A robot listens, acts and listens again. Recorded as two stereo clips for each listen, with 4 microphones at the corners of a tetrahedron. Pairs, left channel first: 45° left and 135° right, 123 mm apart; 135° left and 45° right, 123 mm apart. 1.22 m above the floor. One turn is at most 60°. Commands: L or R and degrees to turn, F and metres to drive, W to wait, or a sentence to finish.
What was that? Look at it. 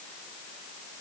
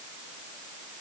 W
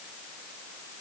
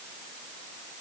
W
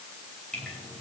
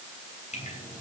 L60
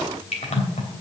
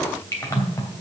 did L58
L60
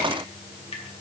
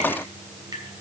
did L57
L10
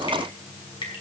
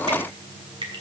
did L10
Found it: dripping, straight ahead, 2 to 4 m away.